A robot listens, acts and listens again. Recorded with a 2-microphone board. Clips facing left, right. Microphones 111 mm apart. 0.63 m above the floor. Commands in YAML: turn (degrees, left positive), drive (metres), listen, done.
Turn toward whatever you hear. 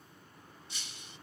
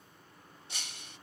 turn: -90
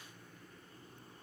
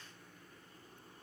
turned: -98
turn: 10
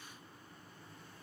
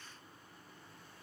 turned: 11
done: "I heard breaking glass from this way, but can't make it out now."